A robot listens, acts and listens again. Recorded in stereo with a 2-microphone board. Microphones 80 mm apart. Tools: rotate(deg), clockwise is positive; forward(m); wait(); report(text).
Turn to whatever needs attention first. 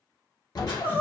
rotate(-25)
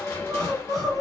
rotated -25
report("Facing the crying.")